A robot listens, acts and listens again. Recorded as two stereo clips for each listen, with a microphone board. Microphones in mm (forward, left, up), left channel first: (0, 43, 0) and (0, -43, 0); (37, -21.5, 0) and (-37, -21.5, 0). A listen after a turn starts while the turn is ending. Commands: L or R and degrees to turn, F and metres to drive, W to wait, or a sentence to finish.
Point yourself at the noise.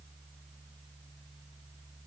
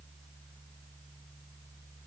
W
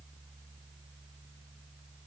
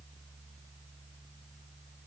W
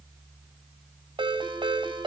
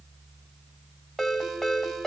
R90
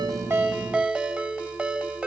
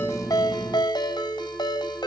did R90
R15
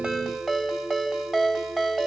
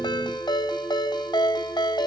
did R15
Found it: a ringtone, straight ahead.